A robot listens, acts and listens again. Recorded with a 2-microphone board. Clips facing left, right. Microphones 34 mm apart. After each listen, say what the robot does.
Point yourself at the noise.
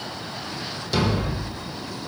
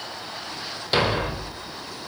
Turn 40° right.
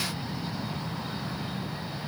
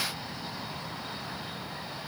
Keep listening.
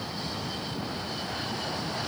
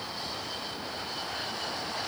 I heard a thud, but can't make it out now. It was about straight ahead or 100° right.